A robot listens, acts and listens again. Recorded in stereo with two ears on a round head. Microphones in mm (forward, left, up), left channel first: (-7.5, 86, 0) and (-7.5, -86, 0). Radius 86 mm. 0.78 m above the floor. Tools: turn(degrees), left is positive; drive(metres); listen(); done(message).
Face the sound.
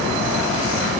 listen()
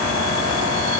listen()
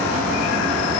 done("I can't make out anything to turn to.")